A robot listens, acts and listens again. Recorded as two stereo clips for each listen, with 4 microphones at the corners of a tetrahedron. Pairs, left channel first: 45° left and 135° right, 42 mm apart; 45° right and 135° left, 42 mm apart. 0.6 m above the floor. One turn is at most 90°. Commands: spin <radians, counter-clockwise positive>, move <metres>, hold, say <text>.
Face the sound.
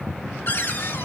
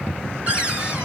spin 1.22
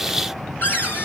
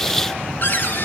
say Found it: a cupboard door, straight ahead.